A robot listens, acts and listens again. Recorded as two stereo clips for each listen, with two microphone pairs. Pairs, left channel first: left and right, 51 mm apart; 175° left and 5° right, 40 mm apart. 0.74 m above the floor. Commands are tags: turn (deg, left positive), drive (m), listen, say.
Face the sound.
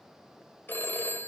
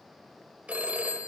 <turn deg="50"/>
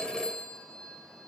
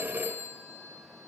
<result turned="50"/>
<turn deg="20"/>
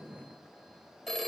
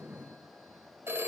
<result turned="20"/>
<turn deg="10"/>
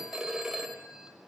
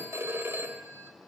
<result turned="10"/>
<say>Facing the phone ringing.</say>